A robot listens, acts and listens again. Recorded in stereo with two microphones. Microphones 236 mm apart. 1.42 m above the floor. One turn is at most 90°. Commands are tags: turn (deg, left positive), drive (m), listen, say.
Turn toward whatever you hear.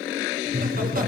<turn deg="-40"/>
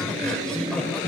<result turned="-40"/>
<say>Facing the laughter.</say>